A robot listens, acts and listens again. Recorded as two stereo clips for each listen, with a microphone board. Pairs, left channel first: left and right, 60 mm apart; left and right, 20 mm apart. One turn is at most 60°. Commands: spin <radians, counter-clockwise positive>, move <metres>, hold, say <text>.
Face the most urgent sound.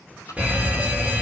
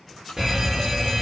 spin -0.35
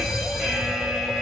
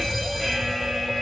say Found it: a fire alarm, straight ahead, 2 to 4 m away.